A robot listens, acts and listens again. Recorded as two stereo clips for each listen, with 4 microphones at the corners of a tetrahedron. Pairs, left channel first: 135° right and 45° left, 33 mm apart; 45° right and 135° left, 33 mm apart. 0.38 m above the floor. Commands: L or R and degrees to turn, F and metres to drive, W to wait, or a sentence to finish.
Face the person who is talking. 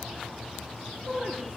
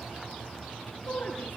R15
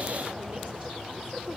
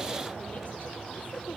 W
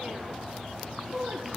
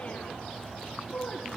Found it: a woman speaking, straight ahead.